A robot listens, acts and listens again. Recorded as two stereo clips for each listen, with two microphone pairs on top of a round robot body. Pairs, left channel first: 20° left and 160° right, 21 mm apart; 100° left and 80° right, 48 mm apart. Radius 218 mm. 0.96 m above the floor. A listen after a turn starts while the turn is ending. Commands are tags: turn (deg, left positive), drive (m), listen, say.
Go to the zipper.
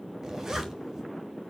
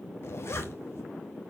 <turn deg="135"/>
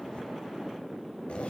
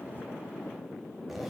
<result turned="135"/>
<drive m="1.0"/>
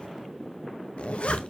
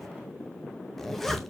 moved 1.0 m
<turn deg="15"/>
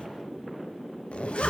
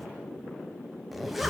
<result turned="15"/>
<turn deg="10"/>
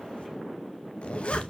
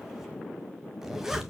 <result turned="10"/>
<drive m="1.0"/>
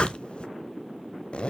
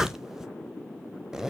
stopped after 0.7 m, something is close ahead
<say>I am next to the zipper.</say>